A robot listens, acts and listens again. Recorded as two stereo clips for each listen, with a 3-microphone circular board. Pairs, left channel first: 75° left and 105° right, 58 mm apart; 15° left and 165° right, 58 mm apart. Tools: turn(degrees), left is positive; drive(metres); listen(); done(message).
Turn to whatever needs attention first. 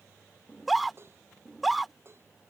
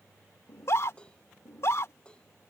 turn(degrees=-15)
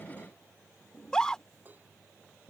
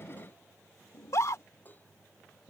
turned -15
done("Found it: a scream, straight ahead.")